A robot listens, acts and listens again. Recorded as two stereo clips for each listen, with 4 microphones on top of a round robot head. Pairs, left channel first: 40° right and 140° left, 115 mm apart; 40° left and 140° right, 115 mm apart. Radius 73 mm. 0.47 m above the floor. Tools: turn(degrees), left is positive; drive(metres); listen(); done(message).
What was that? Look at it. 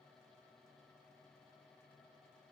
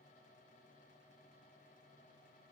listen()
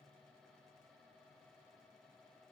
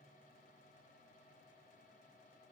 listen()
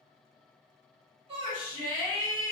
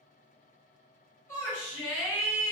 turn(degrees=105)
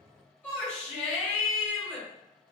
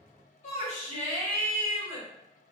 turn(degrees=40)
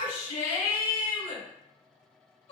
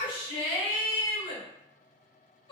done("Facing the shout, 1 to 2 m away.")